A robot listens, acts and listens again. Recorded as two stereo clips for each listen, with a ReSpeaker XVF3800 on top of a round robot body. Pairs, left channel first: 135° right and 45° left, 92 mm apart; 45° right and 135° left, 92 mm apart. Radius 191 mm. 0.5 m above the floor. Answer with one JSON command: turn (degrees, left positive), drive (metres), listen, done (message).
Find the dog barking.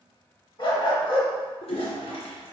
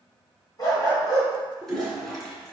{"turn": -100}
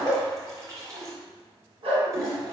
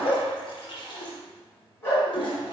{"turn": 20}
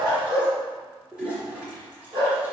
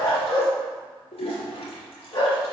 {"done": "Facing the dog barking."}